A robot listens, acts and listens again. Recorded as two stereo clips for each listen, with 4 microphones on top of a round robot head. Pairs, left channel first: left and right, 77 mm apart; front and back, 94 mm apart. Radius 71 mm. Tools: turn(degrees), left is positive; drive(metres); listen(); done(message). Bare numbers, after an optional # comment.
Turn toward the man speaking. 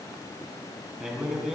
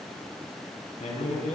done("Found it: a man speaking, straight ahead, over 4 m away.")